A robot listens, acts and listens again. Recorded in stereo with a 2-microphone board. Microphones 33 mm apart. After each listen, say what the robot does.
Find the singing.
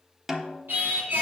Turn 90° right.
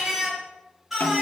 Facing the singing.